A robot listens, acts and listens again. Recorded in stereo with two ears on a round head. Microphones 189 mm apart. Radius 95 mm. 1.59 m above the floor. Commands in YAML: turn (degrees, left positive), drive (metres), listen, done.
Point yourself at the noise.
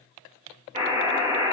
turn: -35
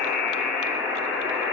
done: "Facing the buzzer."